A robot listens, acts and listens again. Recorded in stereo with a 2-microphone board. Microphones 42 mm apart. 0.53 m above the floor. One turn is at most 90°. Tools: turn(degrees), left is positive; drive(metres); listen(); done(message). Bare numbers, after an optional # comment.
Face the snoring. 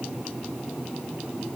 listen()
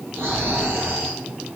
# The snoring: about 70° right or 110° right.
turn(-70)
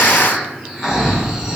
done("Found it: snoring, straight ahead.")